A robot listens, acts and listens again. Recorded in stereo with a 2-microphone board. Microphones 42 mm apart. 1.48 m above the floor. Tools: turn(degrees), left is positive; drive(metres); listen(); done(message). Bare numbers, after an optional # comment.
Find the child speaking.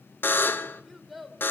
turn(30)
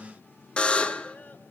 # So it is at 135° left.
turn(135)
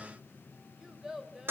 # The child speaking is now 15° right.
turn(-15)
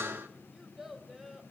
# The child speaking is now 10° right.
turn(-10)
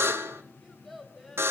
done("Found it: a child speaking, straight ahead.")